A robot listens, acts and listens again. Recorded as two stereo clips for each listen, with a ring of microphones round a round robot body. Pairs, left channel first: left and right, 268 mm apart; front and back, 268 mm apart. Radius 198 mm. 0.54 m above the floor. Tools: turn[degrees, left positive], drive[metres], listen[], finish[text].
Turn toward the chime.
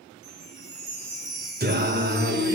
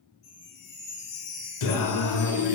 Thought: The chime: 75° right.
Action: turn[-75]
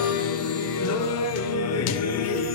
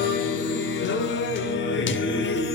Action: listen[]
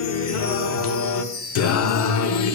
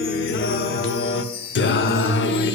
Thought: The chime is now 10° left.
Action: turn[10]
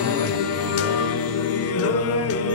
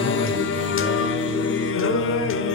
Action: listen[]
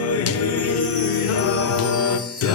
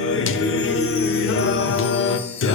Action: listen[]
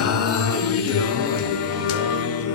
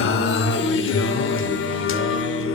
Action: finish[Facing where the chime came from. I can't hear it now.]